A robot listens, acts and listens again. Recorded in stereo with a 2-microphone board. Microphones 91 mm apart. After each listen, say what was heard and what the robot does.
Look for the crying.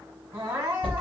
The crying: about 30° right or 150° right. Turn 30° right.
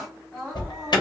Found it: crying, straight ahead, 1 to 2 m away.